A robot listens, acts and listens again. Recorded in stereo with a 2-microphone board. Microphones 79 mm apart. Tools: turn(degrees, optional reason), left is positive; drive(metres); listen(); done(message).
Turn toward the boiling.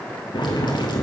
turn(degrees=70, reason="The boiling: about 70° left or 110° left.")
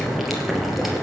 done("Found it: boiling, straight ahead, 2 to 4 m away.")